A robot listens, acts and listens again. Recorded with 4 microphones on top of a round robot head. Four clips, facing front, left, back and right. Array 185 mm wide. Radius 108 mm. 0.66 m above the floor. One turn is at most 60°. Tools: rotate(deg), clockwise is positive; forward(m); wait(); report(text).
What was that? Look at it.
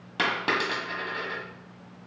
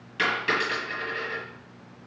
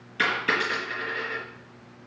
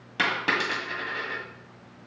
rotate(35)
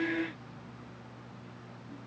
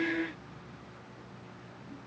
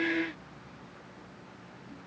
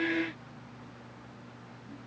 report("I heard a dropped coin from this way, but can't make it out now.")